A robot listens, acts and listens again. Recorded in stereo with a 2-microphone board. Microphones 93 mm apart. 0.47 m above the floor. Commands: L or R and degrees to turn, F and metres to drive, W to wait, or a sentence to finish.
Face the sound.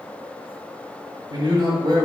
R50
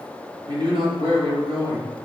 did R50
R65
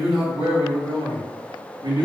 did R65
R55
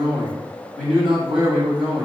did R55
Facing the man speaking, 2 to 4 m away.